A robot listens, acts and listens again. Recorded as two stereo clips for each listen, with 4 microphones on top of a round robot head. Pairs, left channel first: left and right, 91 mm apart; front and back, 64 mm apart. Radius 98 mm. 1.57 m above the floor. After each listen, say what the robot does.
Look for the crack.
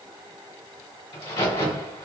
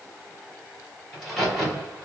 Turn 85° left.
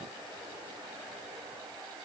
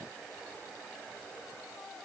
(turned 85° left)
I heard a crack from this way, but can't make it out now.